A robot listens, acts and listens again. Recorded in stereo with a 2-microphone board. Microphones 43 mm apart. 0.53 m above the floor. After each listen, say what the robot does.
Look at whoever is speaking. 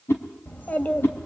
Turn 40° left.
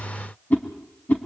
Keep listening.
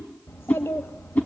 Turn 100° left.
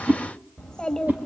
Turn 20° left.
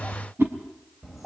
Turn 10° right.
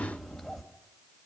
Facing the child speaking.